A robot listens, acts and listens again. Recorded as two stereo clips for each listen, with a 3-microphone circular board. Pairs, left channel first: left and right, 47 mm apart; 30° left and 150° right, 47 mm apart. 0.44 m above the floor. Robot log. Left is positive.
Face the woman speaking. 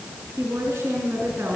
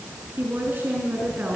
note: The woman speaking: 105° right.
cmd yaw -105
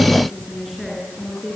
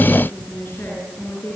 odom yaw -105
end: Found it: a woman speaking, straight ahead.